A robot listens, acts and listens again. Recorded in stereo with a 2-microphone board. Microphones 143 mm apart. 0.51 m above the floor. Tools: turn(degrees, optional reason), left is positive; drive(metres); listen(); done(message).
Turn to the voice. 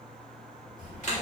turn(degrees=60, reason="The child speaking: about 60° left or 120° left.")
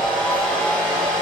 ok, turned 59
turn(degrees=50, reason="So it is at 50° left.")
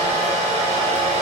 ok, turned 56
done("Facing the child speaking.")